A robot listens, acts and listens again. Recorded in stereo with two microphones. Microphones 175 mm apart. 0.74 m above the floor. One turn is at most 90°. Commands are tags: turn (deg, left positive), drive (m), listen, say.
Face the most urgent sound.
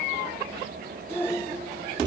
<turn deg="30"/>
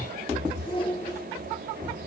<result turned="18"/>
<turn deg="90"/>
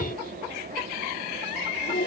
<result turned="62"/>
<turn deg="90"/>
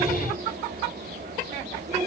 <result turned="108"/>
<turn deg="-20"/>
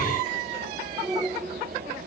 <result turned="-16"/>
<say>Found it: a shout, straight ahead.</say>